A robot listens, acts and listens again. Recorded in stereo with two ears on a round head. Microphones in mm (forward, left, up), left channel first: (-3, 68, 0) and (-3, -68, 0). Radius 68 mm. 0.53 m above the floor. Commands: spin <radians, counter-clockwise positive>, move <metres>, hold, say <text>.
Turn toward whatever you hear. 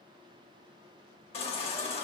spin 0.70
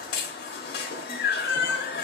spin 1.75
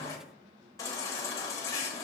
spin 0.35
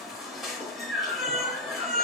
say Found it: a baby crying, straight ahead, under 1 m away.